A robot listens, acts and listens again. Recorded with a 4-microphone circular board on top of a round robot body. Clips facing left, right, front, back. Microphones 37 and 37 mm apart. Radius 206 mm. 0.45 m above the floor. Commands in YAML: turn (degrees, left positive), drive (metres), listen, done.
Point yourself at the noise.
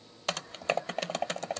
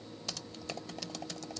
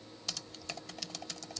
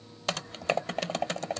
turn: 130
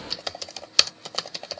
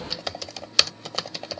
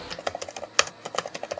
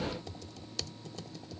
done: "Facing the typing on a keyboard."